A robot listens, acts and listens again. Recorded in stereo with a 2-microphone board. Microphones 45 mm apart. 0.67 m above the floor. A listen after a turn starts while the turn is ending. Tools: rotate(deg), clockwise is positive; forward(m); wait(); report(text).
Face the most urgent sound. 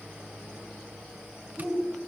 rotate(-30)
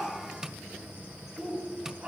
rotate(25)
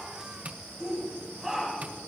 report("Found it: a shout, straight ahead.")